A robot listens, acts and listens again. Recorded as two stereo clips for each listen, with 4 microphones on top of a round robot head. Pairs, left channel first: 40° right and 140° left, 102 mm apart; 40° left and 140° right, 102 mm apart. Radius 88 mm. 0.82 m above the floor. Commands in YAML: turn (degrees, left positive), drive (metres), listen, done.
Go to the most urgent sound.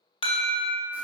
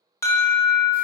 turn: -20
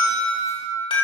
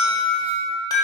drive: 1.0
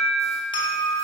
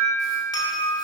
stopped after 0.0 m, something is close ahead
done: "Blocked. The alarm is further on, straight ahead."